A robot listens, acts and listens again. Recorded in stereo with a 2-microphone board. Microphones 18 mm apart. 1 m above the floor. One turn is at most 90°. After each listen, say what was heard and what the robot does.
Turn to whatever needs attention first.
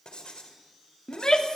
The shout: about 40° left or 140° left. Turn 40° left.
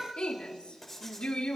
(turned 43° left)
So it is at 95° left. Turn 90° left.
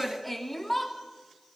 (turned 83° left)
The shout is now 10° left. Turn 10° left.
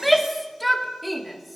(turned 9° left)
Facing the shout, 2 to 4 m away.